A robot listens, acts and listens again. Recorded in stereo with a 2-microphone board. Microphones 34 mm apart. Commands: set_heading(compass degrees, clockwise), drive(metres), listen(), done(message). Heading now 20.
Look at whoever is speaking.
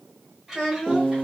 set_heading(50)
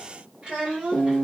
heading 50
set_heading(70)
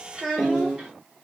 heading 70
set_heading(90)
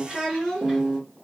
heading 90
set_heading(120)
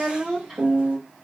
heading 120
set_heading(150)
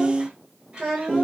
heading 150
set_heading(300)
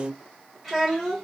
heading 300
done("Facing the child speaking.")